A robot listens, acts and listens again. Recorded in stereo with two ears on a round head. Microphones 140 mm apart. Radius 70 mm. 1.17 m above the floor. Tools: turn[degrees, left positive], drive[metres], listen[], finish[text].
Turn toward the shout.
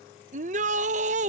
Thought: The shout: about 50° right or 130° right.
Action: turn[-50]
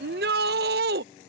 Thought: So it is at 75° right.
Action: turn[-75]
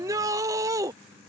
Thought: The shout is now 20° right.
Action: turn[-20]
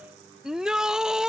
Action: finish[Found it: a shout, straight ahead.]